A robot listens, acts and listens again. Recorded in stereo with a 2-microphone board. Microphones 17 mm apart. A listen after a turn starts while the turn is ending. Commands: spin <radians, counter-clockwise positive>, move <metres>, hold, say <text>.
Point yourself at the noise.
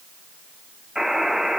spin -0.87
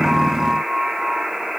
spin -1.31
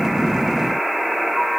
spin -0.44
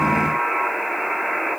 spin -0.17
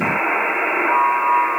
say Found it: a buzzer, straight ahead, 2 to 4 m away.